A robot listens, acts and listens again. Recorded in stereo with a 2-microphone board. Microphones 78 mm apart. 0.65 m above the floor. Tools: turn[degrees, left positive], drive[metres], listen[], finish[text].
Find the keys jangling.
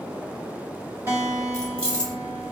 Action: turn[30]
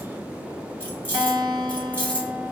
Thought: The keys jangling: about 15° left or 165° left.
Action: turn[15]
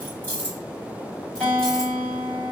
Thought: The keys jangling: about 20° left or 160° left.
Action: turn[20]
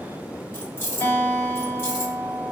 Thought: So it is at 145° left.
Action: turn[145]
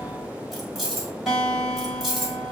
Action: finish[Facing the keys jangling, 1 to 2 m away.]